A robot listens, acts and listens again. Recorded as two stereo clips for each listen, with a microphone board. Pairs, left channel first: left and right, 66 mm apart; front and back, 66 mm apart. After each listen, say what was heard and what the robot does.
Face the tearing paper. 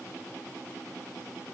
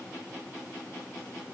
Keep listening.
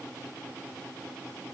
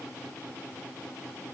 Keep listening.
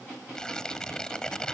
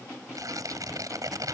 The tearing paper: 170° left. Turn 170° left.
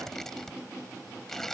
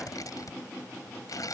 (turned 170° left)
Found it: tearing paper, straight ahead.